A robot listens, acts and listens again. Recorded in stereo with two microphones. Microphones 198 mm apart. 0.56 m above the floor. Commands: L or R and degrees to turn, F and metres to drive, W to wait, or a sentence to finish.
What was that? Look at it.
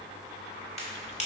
L30
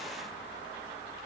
W
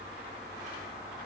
I heard a crack, but can't make it out now. It was about straight ahead or 120° left.